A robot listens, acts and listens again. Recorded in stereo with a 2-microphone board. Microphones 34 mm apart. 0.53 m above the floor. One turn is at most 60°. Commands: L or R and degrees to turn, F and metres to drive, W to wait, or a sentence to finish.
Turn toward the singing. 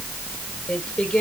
L30
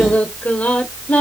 L60
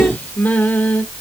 L55
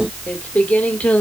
L45
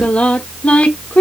L40
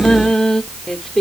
L10
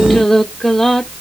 L10
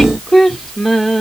Facing the singing, 1 to 2 m away.